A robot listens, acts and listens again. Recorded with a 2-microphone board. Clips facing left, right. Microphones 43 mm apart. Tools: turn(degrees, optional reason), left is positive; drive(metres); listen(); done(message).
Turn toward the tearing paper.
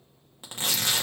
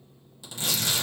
turn(degrees=40, reason="The tearing paper: about 40° left or 140° left.")
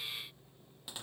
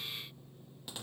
done("Facing the tearing paper, 1 to 2 m away.")